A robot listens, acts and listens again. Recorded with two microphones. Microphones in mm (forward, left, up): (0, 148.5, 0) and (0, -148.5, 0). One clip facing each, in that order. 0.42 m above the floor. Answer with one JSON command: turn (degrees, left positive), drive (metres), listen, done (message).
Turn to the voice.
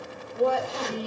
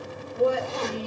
{"turn": -25}
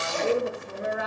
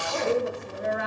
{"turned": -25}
{"done": "Found it: a woman speaking, straight ahead."}